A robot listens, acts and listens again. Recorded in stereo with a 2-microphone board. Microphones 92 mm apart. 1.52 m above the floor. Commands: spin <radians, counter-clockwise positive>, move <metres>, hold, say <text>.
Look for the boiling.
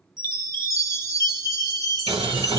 spin -1.57
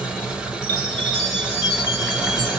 spin -0.17
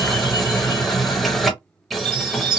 say Facing the boiling.